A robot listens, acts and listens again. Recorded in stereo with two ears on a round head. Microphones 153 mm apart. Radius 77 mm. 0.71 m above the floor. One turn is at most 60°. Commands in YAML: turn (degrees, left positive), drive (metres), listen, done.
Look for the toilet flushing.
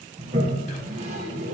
turn: -40
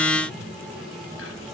done: "Found it: a toilet flushing, straight ahead."